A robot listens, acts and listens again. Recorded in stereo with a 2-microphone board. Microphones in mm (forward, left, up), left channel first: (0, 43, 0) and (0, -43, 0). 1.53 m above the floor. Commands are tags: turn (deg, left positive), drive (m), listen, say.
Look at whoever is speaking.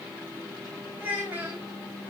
<turn deg="-20"/>
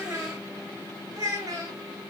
<turn deg="-140"/>
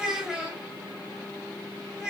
<turn deg="-10"/>
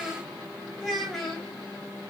<say>Facing the child speaking.</say>